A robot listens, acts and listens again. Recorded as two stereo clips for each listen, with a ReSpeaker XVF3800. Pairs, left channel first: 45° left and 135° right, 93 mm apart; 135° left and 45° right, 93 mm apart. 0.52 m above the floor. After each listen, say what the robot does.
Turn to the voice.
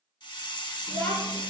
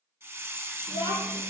Turn 25° right.
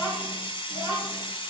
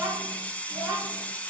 Turn 15° left.
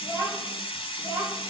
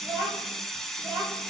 Facing the child speaking, over 4 m away.